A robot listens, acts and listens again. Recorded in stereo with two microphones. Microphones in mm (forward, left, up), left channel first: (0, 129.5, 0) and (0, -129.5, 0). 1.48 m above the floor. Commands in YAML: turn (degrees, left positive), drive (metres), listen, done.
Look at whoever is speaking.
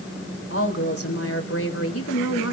turn: 70
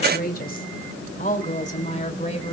turn: 25
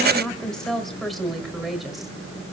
done: "Facing the woman speaking."